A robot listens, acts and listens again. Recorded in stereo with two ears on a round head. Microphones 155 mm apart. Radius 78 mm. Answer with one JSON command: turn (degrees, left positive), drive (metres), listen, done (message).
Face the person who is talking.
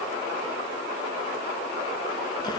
{"listen": true}
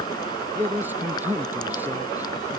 {"turn": -30}
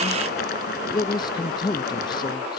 {"turn": 25}
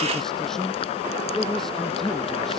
{"done": "Facing the man speaking."}